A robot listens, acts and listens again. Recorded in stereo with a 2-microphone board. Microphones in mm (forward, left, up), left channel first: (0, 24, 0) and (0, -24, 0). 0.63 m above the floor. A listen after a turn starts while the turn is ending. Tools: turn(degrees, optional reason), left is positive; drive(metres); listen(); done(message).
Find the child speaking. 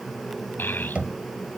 turn(degrees=45, reason="The child speaking: about 45° left or 135° left.")
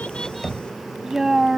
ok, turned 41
turn(degrees=-10, reason="So it is at 10° right.")
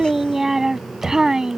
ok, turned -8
turn(degrees=-15, reason="The child speaking is now 15° right.")
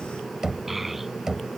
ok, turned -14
done("Facing the child speaking.")